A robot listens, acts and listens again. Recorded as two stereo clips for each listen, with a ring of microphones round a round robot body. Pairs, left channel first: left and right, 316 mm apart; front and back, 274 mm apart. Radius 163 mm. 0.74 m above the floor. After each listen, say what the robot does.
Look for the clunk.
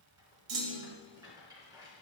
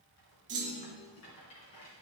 Turn 110° right.
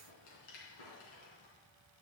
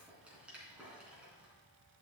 I heard a clunk from this way, but can't make it out now.